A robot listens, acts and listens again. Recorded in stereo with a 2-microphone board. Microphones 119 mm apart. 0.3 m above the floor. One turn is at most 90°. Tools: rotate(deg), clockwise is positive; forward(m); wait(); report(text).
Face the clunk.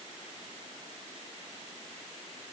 wait()
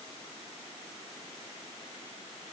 wait()
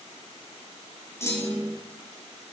rotate(-20)
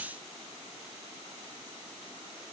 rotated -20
wait()
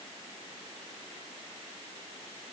report("I heard a clunk, but can't make it out now. It was about straight ahead or 140° left.")